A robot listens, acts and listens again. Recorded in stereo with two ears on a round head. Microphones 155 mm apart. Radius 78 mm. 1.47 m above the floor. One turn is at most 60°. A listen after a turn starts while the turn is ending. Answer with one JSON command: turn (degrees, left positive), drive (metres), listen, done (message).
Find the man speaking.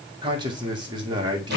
{"turn": -25}
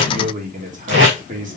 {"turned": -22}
{"turn": -60}
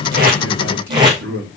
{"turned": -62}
{"turn": -60}
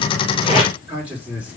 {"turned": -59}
{"turn": -10}
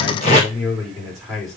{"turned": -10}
{"done": "Facing the man speaking."}